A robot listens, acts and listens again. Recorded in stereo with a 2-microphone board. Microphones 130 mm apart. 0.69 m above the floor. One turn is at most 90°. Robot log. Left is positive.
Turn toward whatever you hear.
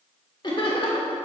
note: The laughter: about 45° left or 135° left.
cmd yaw +45
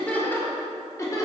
note: So it is at 30° left.
cmd yaw +30
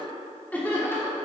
note: The laughter is now 20° left.
cmd yaw +20
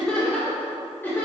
note: The laughter is now 20° left.
cmd yaw +20
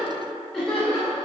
note: The laughter is now 10° left.
cmd yaw +10
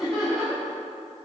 end: Facing the laughter, 2 to 4 m away.